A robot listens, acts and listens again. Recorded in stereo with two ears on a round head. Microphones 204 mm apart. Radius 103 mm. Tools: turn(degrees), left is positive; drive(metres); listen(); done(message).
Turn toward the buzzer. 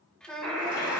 turn(degrees=30)
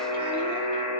turn(degrees=145)
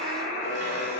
turn(degrees=45)
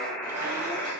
turn(degrees=10)
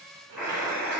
done("Found it: a buzzer, straight ahead.")